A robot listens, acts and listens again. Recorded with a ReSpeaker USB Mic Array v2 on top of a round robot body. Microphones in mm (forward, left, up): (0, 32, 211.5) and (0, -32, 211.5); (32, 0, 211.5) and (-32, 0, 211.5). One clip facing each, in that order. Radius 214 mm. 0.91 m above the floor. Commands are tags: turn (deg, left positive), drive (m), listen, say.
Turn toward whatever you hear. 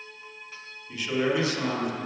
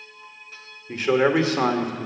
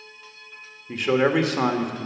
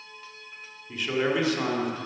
<turn deg="-40"/>
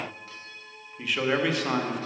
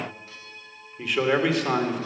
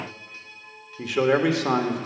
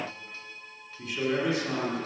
<say>Found it: a man speaking, straight ahead.</say>